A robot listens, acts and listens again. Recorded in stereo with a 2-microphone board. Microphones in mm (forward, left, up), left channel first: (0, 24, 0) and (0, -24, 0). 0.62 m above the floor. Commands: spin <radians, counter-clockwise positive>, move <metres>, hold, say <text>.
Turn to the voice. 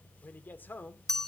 spin 0.70
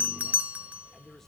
hold
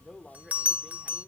spin 0.17
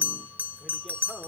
hold
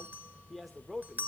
say Facing the man speaking.